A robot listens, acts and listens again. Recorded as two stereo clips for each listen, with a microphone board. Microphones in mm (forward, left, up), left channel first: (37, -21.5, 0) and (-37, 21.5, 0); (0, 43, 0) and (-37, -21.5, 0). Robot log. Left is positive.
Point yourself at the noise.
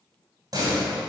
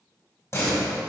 note: The door slam: 110° left.
cmd yaw +110
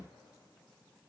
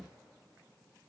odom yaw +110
end: Facing where the door slam came from. I can't hear it now.